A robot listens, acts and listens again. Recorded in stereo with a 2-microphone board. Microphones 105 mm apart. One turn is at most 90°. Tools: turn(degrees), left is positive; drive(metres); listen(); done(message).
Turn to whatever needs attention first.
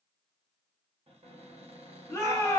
turn(degrees=20)
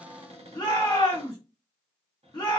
turn(degrees=90)
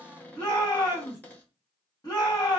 turn(degrees=45)
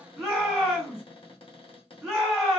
done("Found it: a shout, straight ahead, 1 to 2 m away.")